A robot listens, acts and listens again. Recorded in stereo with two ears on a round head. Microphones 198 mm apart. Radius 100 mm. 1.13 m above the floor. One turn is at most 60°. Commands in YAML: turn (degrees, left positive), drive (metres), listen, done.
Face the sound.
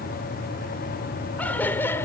turn: 30
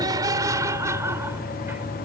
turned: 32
turn: -10
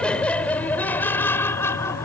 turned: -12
turn: 10
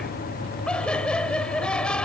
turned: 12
done: "Facing the laughter."